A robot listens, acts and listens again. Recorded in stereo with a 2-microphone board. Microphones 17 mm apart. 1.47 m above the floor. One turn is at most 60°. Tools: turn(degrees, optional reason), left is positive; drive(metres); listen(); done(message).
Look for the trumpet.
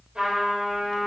turn(degrees=-60)
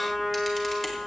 turn(degrees=-15, reason="So it is at 15° right.")
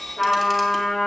done("Facing the trumpet.")